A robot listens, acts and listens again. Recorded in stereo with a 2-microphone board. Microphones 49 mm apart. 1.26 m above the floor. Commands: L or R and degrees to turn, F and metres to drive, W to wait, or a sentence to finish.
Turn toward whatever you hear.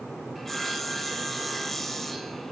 L30
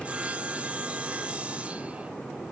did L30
R25
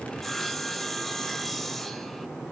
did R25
Facing the sawing, under 1 m away.